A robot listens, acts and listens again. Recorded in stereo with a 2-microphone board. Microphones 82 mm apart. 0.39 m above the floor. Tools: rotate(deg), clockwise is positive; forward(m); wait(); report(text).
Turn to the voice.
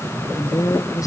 rotate(-45)
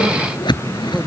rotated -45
wait()
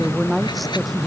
report("Found it: a woman speaking, straight ahead.")